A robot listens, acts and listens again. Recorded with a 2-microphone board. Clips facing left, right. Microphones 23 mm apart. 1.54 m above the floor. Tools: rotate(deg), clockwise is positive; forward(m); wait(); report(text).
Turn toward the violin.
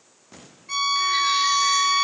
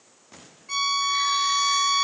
rotate(-30)
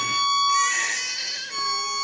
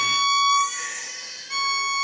rotate(25)
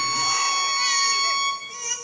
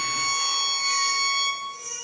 report("Facing the violin.")